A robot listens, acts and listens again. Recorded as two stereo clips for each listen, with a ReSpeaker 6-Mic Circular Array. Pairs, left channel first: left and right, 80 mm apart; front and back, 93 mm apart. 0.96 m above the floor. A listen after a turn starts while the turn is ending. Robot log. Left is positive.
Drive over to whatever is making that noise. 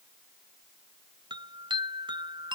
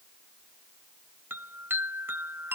note: The chime: 110° right.
cmd yaw -110
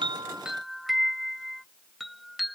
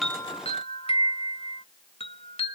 cmd fwd 1.0
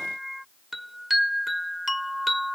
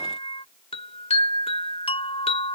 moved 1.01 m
cmd fwd 1.0
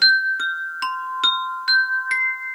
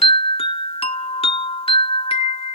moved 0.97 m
cmd fwd 1.0
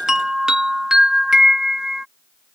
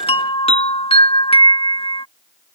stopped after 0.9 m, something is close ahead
end: I am next to the chime.